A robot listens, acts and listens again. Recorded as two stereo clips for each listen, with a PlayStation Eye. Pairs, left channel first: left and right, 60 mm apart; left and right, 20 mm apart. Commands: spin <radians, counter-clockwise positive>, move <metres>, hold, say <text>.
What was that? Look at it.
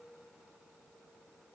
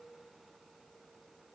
hold
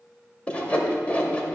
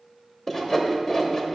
spin 0.35
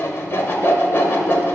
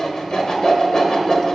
spin 2.36
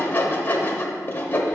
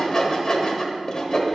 spin 0.61
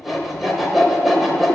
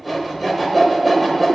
say Found it: sawing, straight ahead, under 1 m away.